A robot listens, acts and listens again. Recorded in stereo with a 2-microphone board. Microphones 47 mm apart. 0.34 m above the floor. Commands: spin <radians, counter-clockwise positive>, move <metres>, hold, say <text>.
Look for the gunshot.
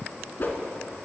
hold
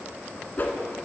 hold
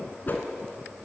say I can't make out a gunshot to turn to.